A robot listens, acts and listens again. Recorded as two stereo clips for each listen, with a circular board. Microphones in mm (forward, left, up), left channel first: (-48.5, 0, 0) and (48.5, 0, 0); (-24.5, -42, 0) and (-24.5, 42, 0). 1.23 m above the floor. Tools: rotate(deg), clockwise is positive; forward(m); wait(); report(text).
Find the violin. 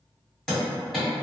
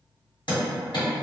wait()
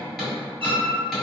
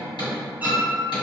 rotate(-20)
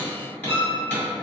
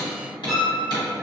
report("Found it: a violin, straight ahead, under 1 m away.")